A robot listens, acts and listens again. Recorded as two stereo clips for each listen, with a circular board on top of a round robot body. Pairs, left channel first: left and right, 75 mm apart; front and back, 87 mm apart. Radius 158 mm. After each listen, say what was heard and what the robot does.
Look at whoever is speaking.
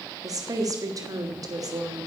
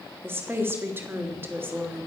The woman speaking: 120° right. Turn 120° right.
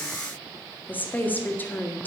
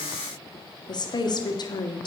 The woman speaking is now 25° left. Turn 25° left.
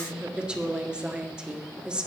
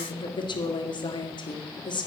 The woman speaking is now 15° right. Turn 15° right.
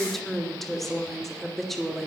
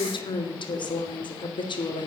Found it: a woman speaking, straight ahead.